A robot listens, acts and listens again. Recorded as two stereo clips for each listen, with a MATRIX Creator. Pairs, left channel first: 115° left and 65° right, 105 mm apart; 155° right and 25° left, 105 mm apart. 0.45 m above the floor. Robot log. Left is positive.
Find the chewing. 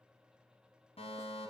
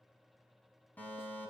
cmd idle
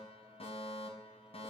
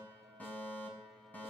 cmd idle
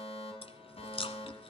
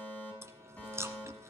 note: The chewing: 85° left.
cmd yaw +85
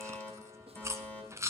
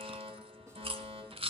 end: Facing the chewing.